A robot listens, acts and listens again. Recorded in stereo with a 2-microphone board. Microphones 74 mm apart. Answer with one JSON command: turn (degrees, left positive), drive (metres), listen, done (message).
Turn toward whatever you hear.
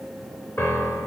{"turn": 40}
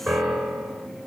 {"done": "Found it: a piano, straight ahead."}